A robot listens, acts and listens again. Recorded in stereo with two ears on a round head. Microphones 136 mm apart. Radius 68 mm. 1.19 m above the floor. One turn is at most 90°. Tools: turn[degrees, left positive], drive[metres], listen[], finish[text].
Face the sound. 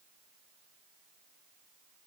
Action: listen[]
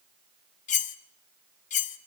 Thought: The cutlery clinking: about 50° left or 130° left.
Action: turn[50]
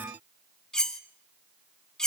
Action: finish[Found it: cutlery clinking, straight ahead.]